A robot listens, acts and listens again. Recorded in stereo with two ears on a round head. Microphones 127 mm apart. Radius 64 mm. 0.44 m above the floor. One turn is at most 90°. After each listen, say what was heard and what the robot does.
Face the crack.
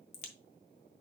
The crack: about 55° left or 125° left. Turn 55° left.
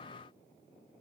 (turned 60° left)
Keep listening.
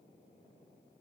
I heard a crack, but can't make it out now. It was about 5° right or 65° left.